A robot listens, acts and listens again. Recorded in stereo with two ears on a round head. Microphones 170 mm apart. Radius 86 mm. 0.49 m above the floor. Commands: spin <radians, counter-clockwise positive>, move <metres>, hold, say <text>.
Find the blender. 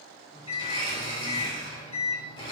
spin 0.44
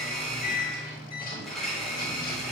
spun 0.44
say Facing the blender.